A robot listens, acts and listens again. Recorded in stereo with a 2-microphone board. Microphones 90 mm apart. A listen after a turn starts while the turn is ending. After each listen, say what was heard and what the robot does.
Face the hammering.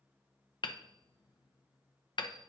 The hammering: about 55° left or 125° left. Turn 55° left.
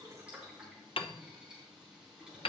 So it is at 70° left. Turn 70° left.
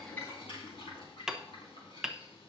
Facing the hammering.